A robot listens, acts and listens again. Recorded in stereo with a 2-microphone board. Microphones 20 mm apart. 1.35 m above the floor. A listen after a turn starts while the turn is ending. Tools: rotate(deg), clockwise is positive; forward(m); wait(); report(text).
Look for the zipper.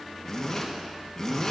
rotate(-25)
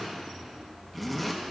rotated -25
report("Facing the zipper, 1 to 2 m away.")